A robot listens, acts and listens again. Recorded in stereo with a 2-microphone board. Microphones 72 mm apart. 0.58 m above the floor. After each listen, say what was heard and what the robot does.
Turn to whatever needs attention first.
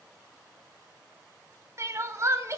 The crying: about 40° right or 140° right. Turn 40° right.
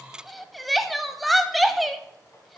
Found it: crying, straight ahead, 1 to 2 m away.